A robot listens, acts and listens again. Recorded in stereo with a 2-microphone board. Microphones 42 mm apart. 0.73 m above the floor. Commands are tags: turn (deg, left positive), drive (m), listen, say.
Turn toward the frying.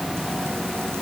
<listen/>
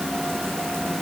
<listen/>
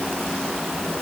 <say>I can't make out frying to turn to.</say>